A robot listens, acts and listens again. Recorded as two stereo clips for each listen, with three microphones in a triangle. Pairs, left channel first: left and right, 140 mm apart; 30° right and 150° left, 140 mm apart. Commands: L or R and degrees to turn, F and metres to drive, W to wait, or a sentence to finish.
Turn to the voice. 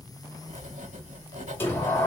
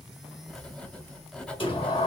W
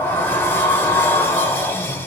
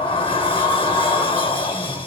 W
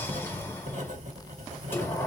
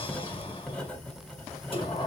I can't make out anyone speaking, only writing and a sliding door.